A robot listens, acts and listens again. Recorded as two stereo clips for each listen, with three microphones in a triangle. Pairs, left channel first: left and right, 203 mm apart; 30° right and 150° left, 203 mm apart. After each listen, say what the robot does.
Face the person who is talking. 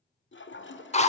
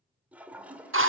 Keep listening.
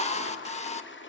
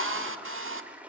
Keep listening.
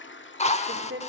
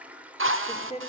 Turn 90° right.
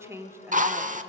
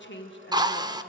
Turn 15° right.
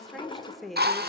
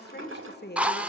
Facing the woman speaking, 1 to 2 m away.